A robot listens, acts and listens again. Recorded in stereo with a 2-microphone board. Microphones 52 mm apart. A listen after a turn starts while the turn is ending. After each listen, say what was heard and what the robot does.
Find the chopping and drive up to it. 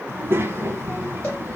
Keep listening.
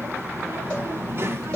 Keep listening.
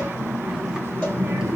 I can't make out chopping to turn to.